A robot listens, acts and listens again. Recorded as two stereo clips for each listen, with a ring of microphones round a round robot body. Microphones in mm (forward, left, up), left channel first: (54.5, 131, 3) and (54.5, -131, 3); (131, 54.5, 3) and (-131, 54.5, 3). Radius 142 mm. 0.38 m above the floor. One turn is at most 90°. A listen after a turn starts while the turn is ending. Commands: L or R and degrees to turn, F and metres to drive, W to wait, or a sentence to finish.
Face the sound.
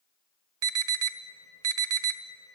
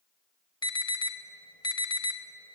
R75
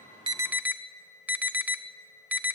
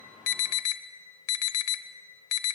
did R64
Found it: an alarm, straight ahead, 1 to 2 m away.